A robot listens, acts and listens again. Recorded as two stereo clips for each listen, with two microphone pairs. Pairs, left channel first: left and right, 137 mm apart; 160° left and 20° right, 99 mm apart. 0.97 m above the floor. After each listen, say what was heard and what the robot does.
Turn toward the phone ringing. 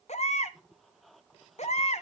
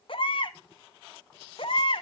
Keep listening.
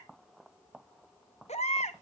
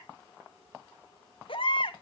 Keep listening.
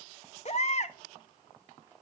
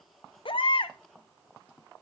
I can't make out a phone ringing to turn to.